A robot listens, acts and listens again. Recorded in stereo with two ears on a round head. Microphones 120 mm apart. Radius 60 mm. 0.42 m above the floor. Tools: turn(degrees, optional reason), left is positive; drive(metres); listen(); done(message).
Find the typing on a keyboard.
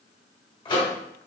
listen()
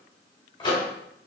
listen()
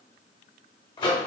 done("I can't make out typing on a keyboard, only a microwave.")